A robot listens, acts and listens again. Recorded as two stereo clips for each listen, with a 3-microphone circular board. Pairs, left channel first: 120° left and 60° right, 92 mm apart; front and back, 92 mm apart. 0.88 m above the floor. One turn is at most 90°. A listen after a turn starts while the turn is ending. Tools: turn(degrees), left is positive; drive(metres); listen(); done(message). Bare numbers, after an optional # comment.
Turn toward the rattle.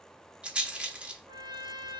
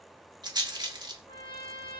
# The rattle: 140° right.
turn(-90)
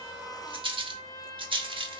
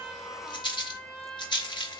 # The rattle is now 35° right.
turn(-35)
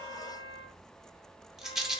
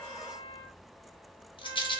# The rattle is now 25° left.
turn(25)
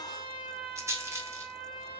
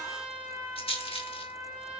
done("Facing the rattle, under 1 m away.")